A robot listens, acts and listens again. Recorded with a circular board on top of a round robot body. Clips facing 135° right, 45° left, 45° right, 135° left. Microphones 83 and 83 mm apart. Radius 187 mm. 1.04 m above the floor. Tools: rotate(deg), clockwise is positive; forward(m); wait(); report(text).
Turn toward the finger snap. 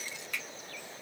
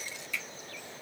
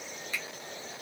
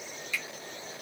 rotate(95)
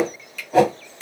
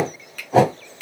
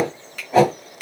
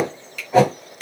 report("Facing the finger snap, 1 to 2 m away.")